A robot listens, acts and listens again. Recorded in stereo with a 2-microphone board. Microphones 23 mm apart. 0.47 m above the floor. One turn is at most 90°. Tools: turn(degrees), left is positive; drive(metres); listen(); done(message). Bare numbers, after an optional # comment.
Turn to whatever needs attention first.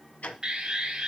# The alarm: about 35° right or 145° right.
turn(-35)
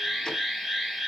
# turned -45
# So it is at 10° left.
turn(10)
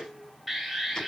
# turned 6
done("Facing the alarm, 2 to 4 m away.")